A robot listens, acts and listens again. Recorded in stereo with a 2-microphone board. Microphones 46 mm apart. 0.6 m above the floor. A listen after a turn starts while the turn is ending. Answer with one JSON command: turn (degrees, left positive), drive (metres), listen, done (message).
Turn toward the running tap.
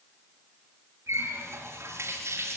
{"turn": -90}
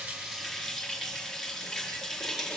{"done": "Facing the running tap, over 4 m away."}